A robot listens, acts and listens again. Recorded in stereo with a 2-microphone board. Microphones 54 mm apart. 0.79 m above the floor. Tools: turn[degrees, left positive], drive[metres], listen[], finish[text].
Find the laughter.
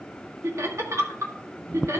Thought: The laughter: about 60° right or 120° right.
Action: turn[-60]
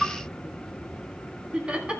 Thought: So it is at 20° right.
Action: turn[-20]
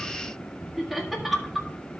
Action: finish[Facing the laughter, 1 to 2 m away.]